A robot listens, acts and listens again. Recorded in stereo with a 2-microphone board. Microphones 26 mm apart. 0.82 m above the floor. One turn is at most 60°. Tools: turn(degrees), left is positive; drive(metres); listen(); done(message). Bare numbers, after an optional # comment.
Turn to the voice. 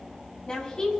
# The woman speaking: about 30° left or 150° left.
turn(30)
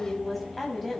done("Facing the woman speaking, over 4 m away.")